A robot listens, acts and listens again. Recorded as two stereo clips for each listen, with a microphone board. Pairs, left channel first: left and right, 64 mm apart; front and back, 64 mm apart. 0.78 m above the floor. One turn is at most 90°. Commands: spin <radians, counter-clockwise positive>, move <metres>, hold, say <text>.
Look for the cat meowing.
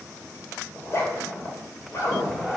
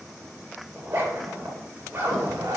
spin 1.57
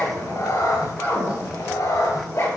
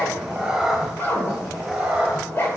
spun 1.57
spin 1.57
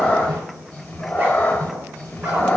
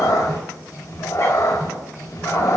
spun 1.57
spin 0.44
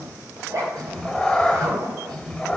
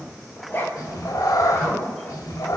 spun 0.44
say Found it: a cat meowing, straight ahead.